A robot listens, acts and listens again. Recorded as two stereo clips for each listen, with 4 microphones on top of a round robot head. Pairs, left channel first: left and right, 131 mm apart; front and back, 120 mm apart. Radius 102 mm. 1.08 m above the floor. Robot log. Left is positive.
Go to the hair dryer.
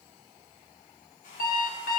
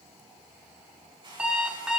note: The hair dryer: 135° left.
cmd yaw +135
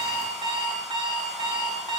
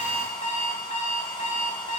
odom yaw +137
cmd idle
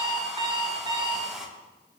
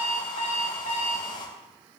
cmd fwd 1.0
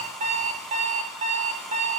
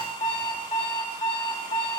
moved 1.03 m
cmd idle
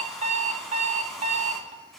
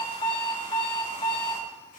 cmd idle
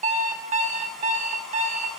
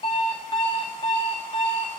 end: Facing where the hair dryer came from. I can't hear it now. I did not reach it.